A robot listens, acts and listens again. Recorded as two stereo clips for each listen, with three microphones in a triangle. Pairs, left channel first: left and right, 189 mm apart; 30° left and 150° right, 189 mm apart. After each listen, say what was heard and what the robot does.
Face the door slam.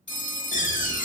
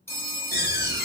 The door slam: 50° left. Turn 50° left.
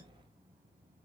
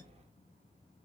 Facing where the door slam came from. I can't hear it now.